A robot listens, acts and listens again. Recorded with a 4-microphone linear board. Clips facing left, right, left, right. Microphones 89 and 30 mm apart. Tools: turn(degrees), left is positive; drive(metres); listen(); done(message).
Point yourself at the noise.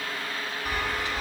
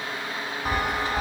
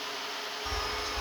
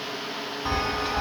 turn(degrees=-50)
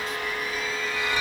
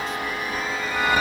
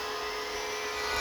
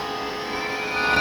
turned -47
turn(degrees=-70)
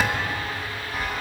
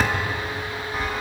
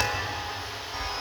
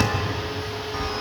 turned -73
done("Found it: a chime, straight ahead, 1 to 2 m away.")